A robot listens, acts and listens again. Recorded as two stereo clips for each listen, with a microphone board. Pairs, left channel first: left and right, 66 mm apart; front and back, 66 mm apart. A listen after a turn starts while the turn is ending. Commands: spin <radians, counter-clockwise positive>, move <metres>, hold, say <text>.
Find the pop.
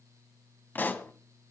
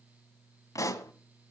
spin 0.52
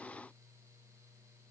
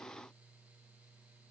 say I heard a pop from this way, but can't make it out now.